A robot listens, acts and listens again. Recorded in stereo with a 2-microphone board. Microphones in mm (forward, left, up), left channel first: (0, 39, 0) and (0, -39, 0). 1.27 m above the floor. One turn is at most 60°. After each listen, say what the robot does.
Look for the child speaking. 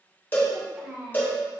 Turn 20° right.
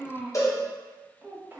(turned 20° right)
Turn 25° right.
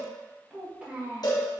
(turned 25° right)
Turn 20° right.
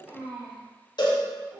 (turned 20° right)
Turn 30° right.
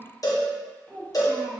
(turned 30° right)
Turn 10° left.
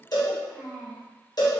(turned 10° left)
Facing the child speaking, 1 to 2 m away.